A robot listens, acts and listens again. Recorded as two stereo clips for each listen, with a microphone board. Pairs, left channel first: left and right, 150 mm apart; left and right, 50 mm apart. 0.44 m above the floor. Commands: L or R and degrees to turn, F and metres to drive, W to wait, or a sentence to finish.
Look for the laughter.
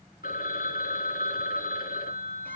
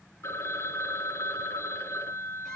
W
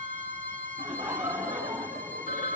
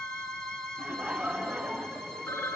R15
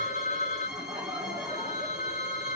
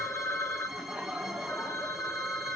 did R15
R25
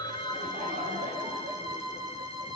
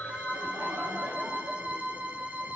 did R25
R135
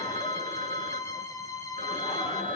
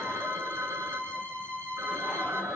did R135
W
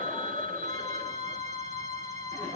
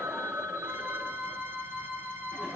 R30
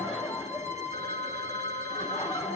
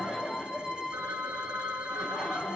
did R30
Facing the laughter, over 4 m away.